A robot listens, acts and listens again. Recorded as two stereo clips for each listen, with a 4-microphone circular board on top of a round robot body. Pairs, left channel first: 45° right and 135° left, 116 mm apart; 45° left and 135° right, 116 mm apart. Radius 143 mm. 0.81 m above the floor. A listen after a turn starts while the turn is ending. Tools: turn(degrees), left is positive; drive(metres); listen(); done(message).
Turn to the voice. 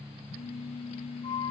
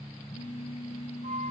listen()
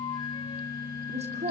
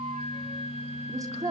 turn(degrees=165)
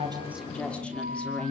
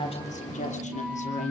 turn(degrees=35)
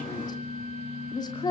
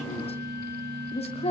turn(degrees=10)
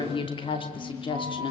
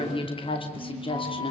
done("Found it: a woman speaking, straight ahead, 2 to 4 m away.")